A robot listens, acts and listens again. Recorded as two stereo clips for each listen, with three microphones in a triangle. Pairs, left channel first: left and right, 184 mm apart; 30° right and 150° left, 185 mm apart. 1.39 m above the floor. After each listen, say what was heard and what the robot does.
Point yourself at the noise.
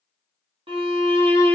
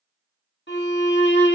The violin: 30° right. Turn 30° right.
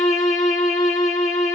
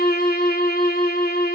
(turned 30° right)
Found it: a violin, straight ahead.